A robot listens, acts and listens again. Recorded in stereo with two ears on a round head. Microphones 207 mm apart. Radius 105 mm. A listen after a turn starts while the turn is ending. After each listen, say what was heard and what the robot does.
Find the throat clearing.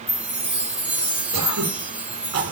Turn 90° right.
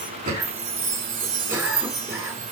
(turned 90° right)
Keep listening.
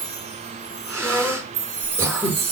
The throat clearing is now 10° right. Turn 10° right.
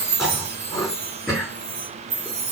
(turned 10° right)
Facing the throat clearing.